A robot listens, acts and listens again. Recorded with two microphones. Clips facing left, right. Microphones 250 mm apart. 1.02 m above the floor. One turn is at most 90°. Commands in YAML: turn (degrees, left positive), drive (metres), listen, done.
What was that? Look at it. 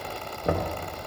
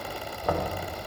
turn: 25
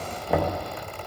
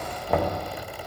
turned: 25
done: "Found it: knocking, straight ahead."